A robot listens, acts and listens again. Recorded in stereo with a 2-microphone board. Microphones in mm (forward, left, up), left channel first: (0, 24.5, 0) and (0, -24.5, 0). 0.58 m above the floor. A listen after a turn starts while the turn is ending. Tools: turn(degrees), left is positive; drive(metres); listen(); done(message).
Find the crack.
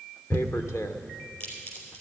turn(degrees=45)
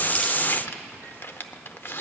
listen()
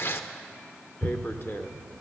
done("I heard a crack, but can't make it out now. It was about straight ahead or 90° left.")